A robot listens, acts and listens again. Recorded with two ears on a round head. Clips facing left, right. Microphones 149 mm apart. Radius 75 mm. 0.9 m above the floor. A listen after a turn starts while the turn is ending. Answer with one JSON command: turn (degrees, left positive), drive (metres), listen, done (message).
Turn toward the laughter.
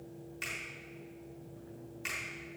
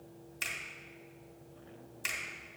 {"listen": true}
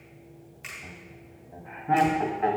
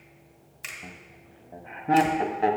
{"turn": -45}
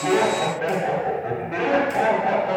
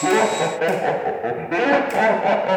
{"turn": -90}
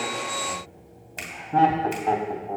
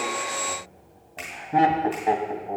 {"turn": -15}
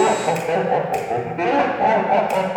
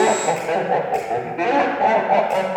{"done": "Facing the laughter, 1 to 2 m away."}